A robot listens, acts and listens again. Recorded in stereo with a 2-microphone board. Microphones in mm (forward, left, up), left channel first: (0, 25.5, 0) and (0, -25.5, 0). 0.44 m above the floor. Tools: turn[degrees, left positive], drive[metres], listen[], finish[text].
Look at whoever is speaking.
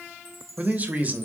Thought: The man speaking: about 35° right or 145° right.
Action: turn[-35]
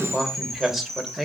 Thought: So it is at 10° right.
Action: turn[-10]
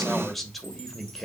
Action: finish[Facing the man speaking.]